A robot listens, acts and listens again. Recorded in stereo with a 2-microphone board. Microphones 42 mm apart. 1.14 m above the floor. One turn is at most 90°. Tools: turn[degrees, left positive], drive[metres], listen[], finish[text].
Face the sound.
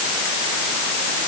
Action: listen[]
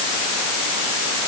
Action: listen[]
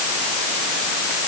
Action: finish[I can't make out anything.]